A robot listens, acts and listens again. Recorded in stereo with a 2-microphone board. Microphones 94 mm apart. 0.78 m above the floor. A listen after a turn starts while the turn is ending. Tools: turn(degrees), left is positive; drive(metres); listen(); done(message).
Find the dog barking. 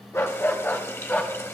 turn(degrees=20)
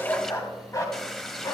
turn(degrees=30)
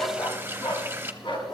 turn(degrees=125)
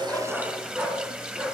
turn(degrees=-15)
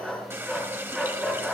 done("Facing the dog barking, 2 to 4 m away.")